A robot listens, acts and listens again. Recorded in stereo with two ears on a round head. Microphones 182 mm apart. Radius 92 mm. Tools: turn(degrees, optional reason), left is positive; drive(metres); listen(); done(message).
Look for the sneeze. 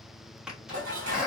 turn(degrees=-30)
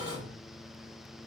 listen()
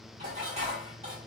done("I heard a sneeze, but can't make it out now. It was about 25° left or 145° right.")